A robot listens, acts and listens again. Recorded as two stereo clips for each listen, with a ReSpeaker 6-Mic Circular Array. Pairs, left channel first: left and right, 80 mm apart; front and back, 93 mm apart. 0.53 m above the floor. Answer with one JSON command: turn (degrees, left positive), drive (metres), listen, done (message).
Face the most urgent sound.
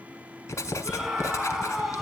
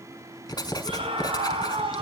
{"turn": 180}
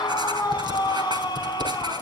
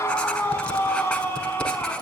{"turn": 65}
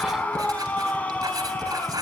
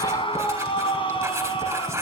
{"turn": 15}
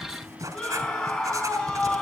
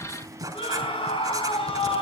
{"done": "Facing the scream, over 4 m away."}